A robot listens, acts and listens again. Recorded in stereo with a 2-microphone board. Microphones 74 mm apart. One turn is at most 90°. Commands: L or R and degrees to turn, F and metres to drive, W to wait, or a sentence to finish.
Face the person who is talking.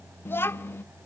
L30
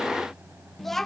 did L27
Found it: a child speaking, straight ahead, under 1 m away.